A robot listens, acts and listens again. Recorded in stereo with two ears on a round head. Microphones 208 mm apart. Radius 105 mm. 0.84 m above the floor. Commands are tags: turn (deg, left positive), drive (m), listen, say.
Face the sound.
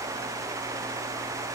<listen/>
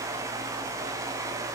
<listen/>
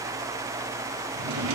<turn deg="-90"/>
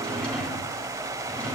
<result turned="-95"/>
<say>Found it: a drawer, straight ahead, over 4 m away.</say>